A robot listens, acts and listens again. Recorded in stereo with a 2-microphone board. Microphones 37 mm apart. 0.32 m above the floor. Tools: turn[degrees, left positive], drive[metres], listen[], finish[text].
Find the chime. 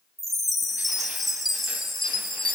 Action: turn[30]
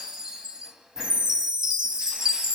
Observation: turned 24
Thought: So it is at 20° right.
Action: turn[-20]
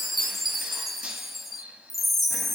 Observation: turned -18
Action: finish[Found it: a chime, straight ahead.]